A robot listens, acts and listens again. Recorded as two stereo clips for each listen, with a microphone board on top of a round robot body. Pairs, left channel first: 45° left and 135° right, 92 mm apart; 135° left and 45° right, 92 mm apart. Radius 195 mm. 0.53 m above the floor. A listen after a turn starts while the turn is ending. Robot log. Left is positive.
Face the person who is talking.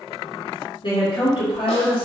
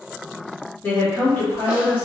note: The woman speaking: 65° left.
cmd yaw +65
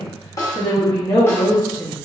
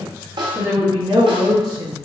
note: The woman speaking is now 15° right.
cmd yaw -15
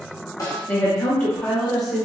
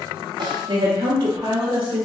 note: The woman speaking is now 45° right.
cmd yaw -45
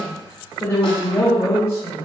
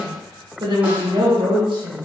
note: The woman speaking is now 20° right.
cmd yaw -20
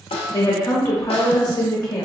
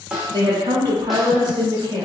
end: Facing the woman speaking, 1 to 2 m away.